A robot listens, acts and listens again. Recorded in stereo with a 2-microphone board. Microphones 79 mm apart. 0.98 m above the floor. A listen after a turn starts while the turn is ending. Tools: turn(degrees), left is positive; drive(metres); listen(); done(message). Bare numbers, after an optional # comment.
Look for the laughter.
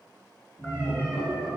turn(90)
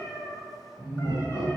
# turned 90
# So it is at 10° right.
turn(-10)
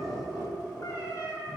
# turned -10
# The laughter is now 10° right.
turn(-10)
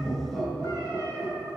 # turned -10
done("Found it: laughter, straight ahead.")